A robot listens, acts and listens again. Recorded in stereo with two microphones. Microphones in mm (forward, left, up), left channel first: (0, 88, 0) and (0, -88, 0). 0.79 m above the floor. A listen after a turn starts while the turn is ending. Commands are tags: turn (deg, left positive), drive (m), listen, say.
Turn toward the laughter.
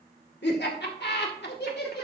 <turn deg="65"/>
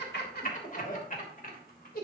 <turn deg="55"/>
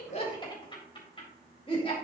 <turn deg="30"/>
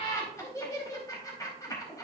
<turn deg="20"/>
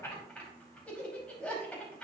<say>Facing the laughter, over 4 m away.</say>